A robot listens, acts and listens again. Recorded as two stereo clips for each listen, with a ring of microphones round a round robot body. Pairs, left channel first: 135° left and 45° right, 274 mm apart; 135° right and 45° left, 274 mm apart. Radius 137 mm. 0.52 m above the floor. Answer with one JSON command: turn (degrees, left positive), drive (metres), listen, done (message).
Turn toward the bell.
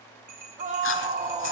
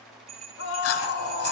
{"turn": -25}
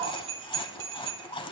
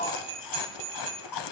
{"done": "Found it: a bell, straight ahead, 2 to 4 m away."}